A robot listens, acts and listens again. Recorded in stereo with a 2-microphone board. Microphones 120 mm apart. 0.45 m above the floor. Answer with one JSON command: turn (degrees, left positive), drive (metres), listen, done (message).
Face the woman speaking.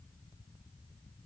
{"listen": true}
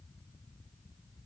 {"listen": true}
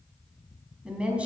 {"turn": -30}
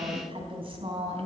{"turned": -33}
{"turn": -130}
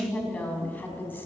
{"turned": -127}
{"turn": 15}
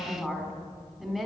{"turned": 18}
{"done": "Facing the woman speaking, over 4 m away."}